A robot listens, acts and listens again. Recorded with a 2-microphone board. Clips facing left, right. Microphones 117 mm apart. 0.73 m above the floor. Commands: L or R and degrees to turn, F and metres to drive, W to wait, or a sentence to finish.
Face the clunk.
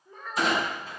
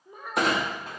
R60
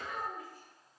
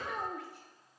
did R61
W
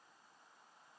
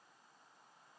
I heard a clunk, but can't make it out now. It was about straight ahead or 60° right.